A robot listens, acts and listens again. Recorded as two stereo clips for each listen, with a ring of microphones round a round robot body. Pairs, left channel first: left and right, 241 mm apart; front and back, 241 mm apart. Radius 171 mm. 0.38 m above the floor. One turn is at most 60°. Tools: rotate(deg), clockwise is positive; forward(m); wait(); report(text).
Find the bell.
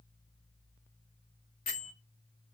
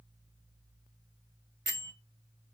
rotate(-60)
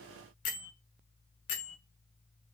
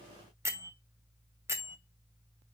rotate(-60)
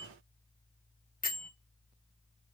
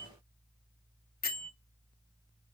rotate(-45)
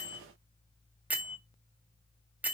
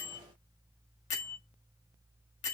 report("Facing the bell, 2 to 4 m away.")